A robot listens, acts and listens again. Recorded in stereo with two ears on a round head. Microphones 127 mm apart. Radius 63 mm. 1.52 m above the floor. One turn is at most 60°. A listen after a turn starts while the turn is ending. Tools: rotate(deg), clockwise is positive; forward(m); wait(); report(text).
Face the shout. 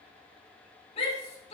rotate(-45)
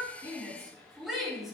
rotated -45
report("Facing the shout, 2 to 4 m away.")